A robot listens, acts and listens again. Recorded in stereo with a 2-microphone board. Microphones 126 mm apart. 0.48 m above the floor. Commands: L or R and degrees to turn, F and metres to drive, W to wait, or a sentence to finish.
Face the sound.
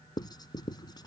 L35
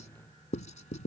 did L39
L105
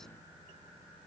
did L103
W
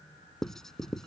Facing the writing.